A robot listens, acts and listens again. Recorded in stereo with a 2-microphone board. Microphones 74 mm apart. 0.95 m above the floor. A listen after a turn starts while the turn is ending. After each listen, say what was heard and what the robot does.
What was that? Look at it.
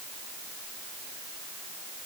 Keep listening.
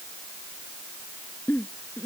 The giggle: about 30° left or 150° left. Turn 30° left.
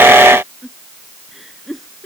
Found it: a giggle, straight ahead.